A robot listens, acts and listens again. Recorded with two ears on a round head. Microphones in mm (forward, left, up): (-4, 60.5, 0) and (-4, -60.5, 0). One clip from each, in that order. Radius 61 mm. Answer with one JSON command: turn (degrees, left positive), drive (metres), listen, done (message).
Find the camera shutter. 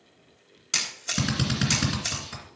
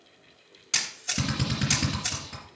{"turn": 30}
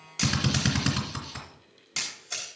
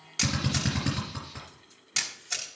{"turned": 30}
{"turn": -30}
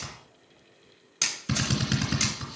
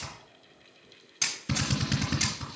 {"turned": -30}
{"turn": 15}
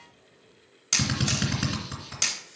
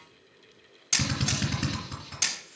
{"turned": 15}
{"turn": 10}
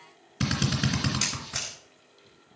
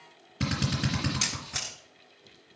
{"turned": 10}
{"done": "Facing the camera shutter."}